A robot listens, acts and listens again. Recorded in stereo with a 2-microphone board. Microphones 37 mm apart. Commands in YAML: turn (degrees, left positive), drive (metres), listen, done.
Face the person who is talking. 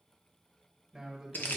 turn: 30
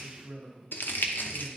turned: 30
turn: -35
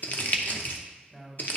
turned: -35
turn: 20
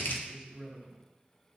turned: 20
done: "Facing the man speaking, 1 to 2 m away."